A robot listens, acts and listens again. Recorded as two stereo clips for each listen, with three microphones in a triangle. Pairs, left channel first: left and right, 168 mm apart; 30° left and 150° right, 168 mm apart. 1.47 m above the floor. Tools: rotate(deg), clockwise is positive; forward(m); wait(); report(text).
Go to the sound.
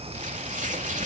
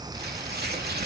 rotate(135)
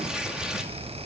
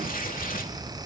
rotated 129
forward(1.0)
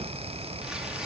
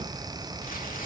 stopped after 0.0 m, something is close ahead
wait()
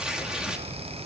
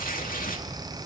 report("Blocked. The tearing paper is further on, straight ahead.")